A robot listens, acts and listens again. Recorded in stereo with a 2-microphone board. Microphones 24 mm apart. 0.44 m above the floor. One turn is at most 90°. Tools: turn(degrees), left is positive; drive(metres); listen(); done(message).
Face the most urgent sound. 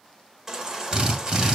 turn(degrees=-25)
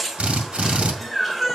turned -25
done("Facing the baby crying, 1 to 2 m away.")